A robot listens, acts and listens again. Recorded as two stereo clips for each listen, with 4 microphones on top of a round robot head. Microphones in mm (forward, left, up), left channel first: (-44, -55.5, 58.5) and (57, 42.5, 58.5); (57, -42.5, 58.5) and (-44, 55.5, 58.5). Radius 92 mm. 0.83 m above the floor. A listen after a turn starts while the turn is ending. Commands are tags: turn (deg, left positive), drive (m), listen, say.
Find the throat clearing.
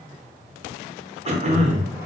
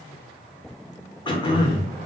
<turn deg="10"/>
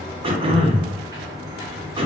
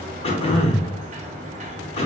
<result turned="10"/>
<say>Found it: throat clearing, straight ahead, 1 to 2 m away.</say>